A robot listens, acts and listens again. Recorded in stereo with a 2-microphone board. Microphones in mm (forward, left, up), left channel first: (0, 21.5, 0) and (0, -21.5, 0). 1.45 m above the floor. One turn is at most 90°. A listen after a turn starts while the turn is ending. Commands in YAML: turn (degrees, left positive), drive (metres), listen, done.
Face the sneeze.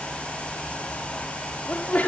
turn: 40
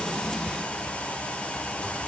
listen: true
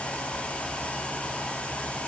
done: "I heard a sneeze, but can't make it out now. It was about straight ahead or 100° left."